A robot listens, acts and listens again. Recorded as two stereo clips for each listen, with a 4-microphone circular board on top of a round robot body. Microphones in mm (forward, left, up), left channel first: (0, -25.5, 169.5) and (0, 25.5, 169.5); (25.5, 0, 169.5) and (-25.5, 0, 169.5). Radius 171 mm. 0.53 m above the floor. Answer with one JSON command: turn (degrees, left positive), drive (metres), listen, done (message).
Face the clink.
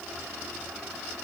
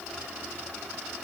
{"listen": true}
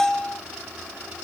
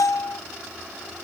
{"listen": true}
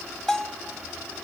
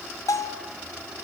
{"done": "I can't make out a clink, only a bell."}